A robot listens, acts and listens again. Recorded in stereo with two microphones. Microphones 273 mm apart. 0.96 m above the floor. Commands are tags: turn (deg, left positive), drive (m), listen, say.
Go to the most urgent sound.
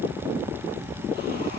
<listen/>
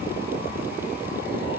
<listen/>
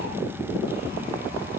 <say>I can't make out anything urgent.</say>